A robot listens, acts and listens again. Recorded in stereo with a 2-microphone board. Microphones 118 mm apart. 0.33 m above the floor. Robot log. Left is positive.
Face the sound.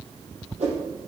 note: The whoosh: about 70° right or 110° right.
cmd yaw -70
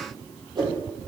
note: So it is at 40° right.
cmd yaw -40
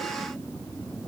cmd idle
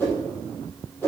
note: The whoosh is now 15° left.
cmd yaw +15
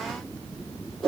end: Found it: a whoosh, straight ahead, over 4 m away.